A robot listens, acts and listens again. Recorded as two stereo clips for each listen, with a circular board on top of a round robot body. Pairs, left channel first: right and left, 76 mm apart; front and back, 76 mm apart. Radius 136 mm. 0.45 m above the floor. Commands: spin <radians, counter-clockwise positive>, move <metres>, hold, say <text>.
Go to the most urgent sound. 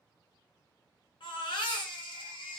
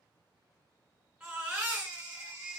spin -1.83
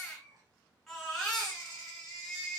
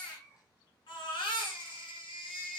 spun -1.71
move 1.0
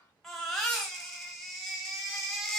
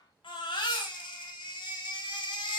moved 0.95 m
move 1.0
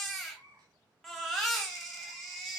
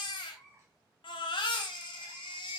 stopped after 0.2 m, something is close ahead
say I am next to the baby crying.